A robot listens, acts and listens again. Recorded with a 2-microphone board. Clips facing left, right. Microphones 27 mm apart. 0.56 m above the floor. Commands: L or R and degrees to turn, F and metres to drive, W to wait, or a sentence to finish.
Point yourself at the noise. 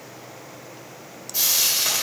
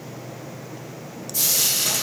L25
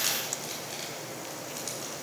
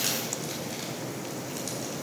W
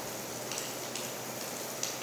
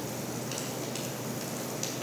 W
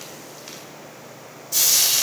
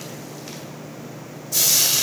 Found it: frying, straight ahead.